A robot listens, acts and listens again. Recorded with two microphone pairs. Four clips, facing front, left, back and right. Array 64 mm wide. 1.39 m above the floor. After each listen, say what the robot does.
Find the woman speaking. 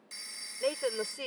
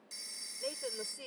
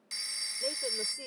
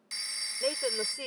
Turn 40° right.
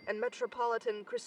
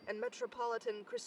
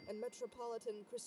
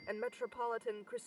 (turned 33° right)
Found it: a woman speaking, straight ahead.